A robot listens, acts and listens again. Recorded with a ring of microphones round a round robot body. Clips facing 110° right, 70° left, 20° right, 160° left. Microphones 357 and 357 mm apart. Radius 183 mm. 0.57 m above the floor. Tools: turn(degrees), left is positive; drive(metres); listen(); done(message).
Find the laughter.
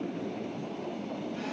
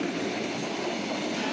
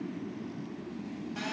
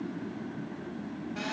listen()
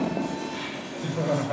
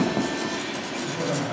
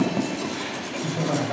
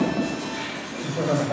turn(degrees=-90)
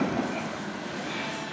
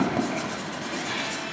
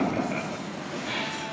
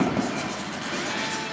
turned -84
listen()
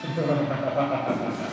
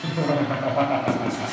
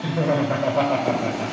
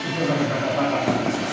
done("Found it: laughter, straight ahead, 2 to 4 m away.")